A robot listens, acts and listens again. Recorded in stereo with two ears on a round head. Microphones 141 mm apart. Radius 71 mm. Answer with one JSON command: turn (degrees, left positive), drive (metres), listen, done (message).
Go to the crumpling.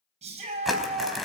{"turn": 30}
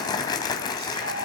{"turn": 150}
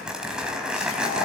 {"drive": 1.0}
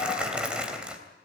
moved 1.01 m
{"drive": 1.0}
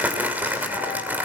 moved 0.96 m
{"turn": -10}
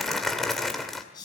{"drive": 1.0}
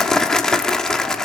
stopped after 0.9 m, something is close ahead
{"done": "I am next to the crumpling."}